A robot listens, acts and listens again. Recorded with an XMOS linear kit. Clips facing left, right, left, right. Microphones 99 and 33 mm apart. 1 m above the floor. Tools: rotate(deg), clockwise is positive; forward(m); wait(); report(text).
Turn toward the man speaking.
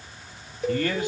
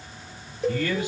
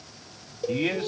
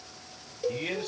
rotate(-55)
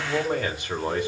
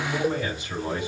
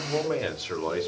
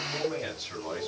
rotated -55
rotate(-55)
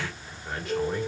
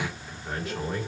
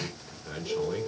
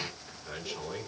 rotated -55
report("Facing the man speaking, 2 to 4 m away.")